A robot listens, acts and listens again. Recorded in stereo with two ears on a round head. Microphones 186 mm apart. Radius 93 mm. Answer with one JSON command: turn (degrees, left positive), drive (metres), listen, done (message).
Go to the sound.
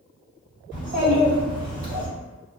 {"turn": -40}
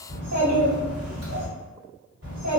{"turn": -95}
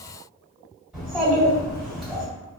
{"drive": 1.0}
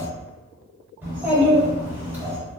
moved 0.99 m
{"turn": -10}
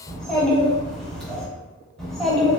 {"drive": 1.0}
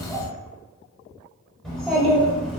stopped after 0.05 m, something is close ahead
{"done": "I am next to the child speaking."}